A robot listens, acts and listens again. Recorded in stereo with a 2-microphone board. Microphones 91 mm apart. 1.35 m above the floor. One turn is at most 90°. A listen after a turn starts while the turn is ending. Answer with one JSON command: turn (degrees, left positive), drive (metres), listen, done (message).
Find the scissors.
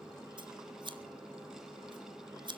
{"turn": -60}
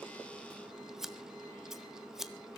{"done": "Found it: scissors, straight ahead, 1 to 2 m away."}